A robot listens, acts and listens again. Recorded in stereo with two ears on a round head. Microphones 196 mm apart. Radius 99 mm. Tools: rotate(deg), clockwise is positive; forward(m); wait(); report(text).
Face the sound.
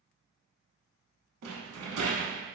rotate(90)
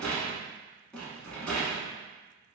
report("Found it: a rattle, straight ahead.")